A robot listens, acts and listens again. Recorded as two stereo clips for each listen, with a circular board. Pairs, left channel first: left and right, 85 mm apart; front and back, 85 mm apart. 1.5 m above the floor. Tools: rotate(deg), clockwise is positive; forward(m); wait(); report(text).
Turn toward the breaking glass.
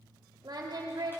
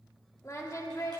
wait()
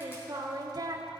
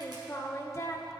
wait()
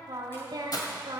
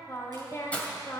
rotate(-70)
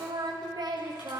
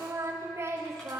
report("I heard breaking glass from this way, but can't make it out now.")